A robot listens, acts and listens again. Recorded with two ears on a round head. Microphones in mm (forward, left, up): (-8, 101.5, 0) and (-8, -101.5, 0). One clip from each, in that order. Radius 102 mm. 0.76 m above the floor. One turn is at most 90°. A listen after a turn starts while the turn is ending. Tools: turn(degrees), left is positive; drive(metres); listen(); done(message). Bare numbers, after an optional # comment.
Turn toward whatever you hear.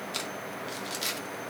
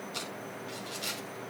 # The crumpling: about 40° left or 140° left.
turn(40)
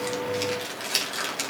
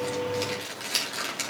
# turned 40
# So it is at 10° left.
turn(10)
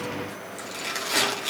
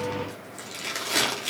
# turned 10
done("Found it: crumpling, straight ahead, 2 to 4 m away.")